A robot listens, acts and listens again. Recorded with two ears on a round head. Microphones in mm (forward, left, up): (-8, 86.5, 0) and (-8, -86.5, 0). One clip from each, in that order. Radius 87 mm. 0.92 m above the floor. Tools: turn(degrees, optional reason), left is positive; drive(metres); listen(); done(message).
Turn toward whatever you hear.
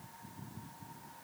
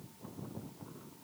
listen()
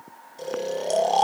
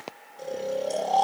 turn(degrees=55, reason="The snoring: about 55° left or 125° left.")
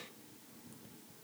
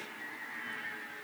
listen()
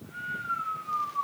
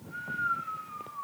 turn(degrees=55, reason="So it is at 55° left.")
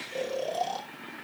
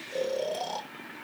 done("Found it: snoring, straight ahead, 1 to 2 m away.")